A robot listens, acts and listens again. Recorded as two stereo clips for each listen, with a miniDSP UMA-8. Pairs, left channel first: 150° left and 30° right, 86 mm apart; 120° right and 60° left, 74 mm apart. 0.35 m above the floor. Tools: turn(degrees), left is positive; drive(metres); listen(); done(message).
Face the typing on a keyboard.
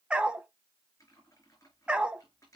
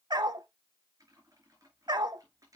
turn(degrees=100)
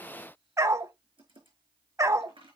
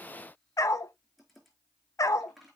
turn(degrees=-30)
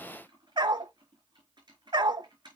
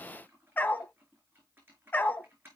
done("Found it: typing on a keyboard, straight ahead, over 4 m away.")